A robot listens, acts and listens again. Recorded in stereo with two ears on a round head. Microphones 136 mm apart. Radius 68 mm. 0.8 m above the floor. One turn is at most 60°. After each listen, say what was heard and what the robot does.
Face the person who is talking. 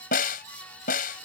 Keep listening.
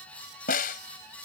Keep listening.
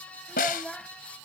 Turn 30° left.
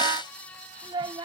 So it is at 30° right. Turn 30° right.
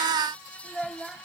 Facing the child speaking.